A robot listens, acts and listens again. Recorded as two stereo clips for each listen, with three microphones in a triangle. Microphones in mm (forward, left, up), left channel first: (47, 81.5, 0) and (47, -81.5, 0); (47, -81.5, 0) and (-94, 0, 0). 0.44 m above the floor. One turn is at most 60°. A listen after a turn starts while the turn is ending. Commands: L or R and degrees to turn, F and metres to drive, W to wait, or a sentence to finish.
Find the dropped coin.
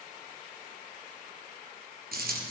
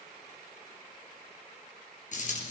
R60
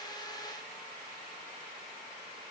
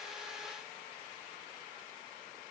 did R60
R10
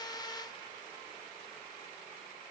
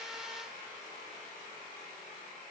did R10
I heard a dropped coin from this way, but can't make it out now.